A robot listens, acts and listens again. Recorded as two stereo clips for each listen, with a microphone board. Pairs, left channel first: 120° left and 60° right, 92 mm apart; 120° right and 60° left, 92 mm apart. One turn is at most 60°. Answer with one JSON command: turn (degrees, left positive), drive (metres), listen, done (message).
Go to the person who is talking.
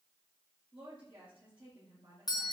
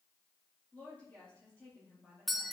{"turn": -45}
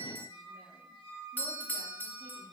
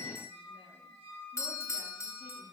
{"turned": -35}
{"turn": -10}
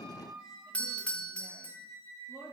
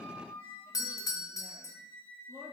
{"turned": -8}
{"drive": 1.0}
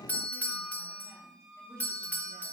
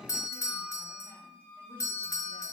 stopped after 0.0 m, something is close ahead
{"listen": true}
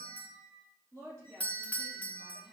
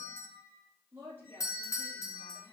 {"done": "Something is in my way. I am facing the woman speaking but have not reached it."}